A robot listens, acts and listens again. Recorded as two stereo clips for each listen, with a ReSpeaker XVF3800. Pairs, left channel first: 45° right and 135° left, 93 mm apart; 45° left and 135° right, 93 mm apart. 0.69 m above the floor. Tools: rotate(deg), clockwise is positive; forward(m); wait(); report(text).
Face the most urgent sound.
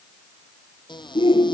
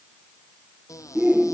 rotate(60)
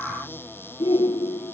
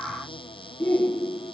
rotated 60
rotate(25)
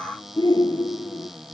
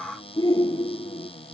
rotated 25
report("Facing the shout.")